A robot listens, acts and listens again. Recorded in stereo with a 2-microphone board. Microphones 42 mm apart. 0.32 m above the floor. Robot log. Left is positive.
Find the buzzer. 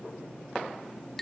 cmd idle
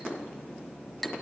cmd idle
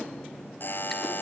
note: The buzzer: about 55° left or 125° left.
cmd yaw +55
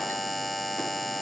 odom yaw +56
end: Found it: a buzzer, straight ahead.